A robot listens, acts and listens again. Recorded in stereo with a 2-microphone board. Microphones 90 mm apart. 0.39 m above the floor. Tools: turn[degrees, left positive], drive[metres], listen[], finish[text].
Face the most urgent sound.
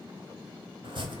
Action: listen[]
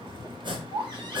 Thought: The baby crying: about 55° right or 125° right.
Action: turn[-55]
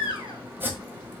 Thought: So it is at 65° right.
Action: turn[-65]
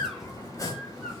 Action: finish[Facing the baby crying, over 4 m away.]